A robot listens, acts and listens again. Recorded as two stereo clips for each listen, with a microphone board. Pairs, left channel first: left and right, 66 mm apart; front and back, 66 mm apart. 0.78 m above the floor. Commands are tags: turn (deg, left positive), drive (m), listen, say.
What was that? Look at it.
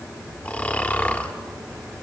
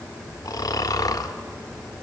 <turn deg="25"/>
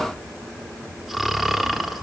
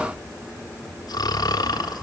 <say>Found it: snoring, straight ahead.</say>